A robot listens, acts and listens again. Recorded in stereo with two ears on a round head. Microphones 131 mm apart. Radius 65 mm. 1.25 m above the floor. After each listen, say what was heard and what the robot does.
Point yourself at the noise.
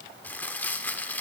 Turn 30° left.
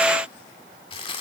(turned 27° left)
So it is at 140° left. Turn 140° left.
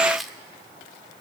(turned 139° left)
Facing the crumpling, 1 to 2 m away.